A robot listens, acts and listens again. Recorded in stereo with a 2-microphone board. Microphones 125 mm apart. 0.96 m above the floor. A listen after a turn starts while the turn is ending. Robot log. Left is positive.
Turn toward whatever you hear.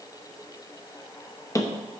note: The hammering: about 25° left or 155° left.
cmd yaw +25
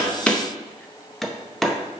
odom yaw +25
end: Facing the hammering.